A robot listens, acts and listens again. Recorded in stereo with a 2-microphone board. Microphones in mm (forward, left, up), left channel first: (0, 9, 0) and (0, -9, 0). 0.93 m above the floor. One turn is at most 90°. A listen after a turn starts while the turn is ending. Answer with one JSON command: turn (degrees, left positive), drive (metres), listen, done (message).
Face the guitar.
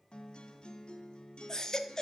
{"turn": 60}
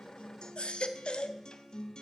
{"turn": 55}
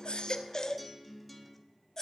{"done": "Facing the guitar, 1 to 2 m away."}